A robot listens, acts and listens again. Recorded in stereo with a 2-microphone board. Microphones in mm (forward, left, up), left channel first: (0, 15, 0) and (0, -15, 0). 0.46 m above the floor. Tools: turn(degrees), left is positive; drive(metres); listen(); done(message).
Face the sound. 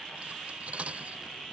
turn(degrees=-50)
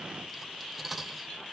done("Facing the cutlery clinking.")